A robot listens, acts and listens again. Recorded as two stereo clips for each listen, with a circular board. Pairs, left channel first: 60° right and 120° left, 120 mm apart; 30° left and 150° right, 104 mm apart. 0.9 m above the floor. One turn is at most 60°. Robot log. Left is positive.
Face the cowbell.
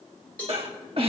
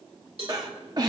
note: The cowbell: 135° right.
cmd yaw -60
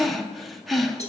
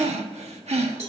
note: Nothing new. It was at 75° right.
cmd yaw -60
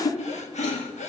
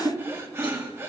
note: Nothing new. It was at 15° right.
cmd yaw -15
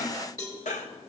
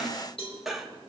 end: Facing the cowbell, 2 to 4 m away.